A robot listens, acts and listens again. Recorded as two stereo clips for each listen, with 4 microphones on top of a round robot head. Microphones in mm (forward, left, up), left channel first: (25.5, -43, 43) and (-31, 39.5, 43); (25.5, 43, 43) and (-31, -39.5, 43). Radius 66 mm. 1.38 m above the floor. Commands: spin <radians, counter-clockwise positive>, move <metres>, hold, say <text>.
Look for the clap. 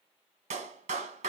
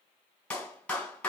spin 2.36
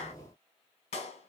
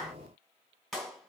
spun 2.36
spin -0.52
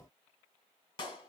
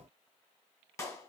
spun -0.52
say Facing the clap.